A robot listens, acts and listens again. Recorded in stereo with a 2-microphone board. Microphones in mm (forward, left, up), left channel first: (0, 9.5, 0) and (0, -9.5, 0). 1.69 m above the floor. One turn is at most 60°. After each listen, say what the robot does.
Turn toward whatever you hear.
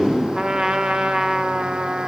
Turn 55° right.
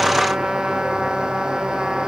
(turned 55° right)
Turn 60° right.
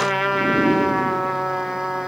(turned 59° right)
Facing the trumpet.